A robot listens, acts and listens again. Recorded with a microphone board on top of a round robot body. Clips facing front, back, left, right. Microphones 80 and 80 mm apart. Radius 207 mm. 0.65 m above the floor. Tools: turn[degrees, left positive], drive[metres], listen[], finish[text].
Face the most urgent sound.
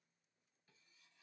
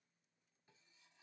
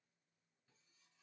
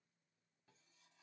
Action: listen[]
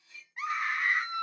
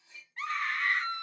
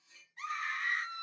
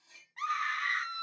Thought: The scream: 75° right.
Action: turn[-75]
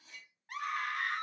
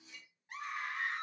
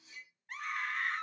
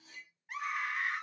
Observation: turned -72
Action: finish[Found it: a scream, straight ahead.]